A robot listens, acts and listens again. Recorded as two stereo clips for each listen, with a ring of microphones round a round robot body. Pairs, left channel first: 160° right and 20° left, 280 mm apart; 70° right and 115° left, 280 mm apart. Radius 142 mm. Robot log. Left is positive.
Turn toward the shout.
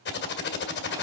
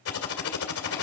cmd idle
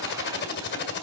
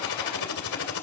cmd idle
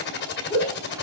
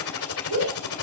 note: The shout: 120° left.
cmd yaw +120
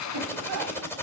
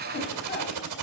note: The shout is now 15° right.
cmd yaw -15
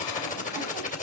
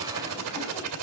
cmd idle
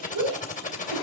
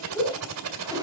end: Found it: a shout, straight ahead, over 4 m away.